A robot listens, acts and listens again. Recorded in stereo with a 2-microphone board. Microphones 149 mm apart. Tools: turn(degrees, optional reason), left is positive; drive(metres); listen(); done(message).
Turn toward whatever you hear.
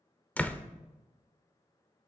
turn(degrees=30)
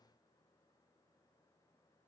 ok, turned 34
listen()
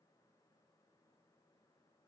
done("I heard a door slam, but can't make it out now. It was about 25° right or 135° left.")